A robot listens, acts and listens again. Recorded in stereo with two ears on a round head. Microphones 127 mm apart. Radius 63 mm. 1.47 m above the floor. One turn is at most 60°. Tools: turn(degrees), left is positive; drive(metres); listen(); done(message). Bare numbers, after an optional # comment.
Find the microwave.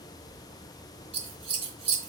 listen()
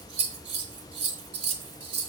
listen()
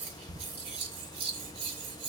done("I can't make out a microwave to turn to.")